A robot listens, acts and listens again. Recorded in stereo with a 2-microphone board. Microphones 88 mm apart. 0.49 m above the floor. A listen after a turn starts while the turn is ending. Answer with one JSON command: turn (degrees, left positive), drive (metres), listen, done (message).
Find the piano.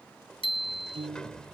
{"turn": -90}
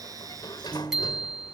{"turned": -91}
{"done": "Found it: a piano, straight ahead."}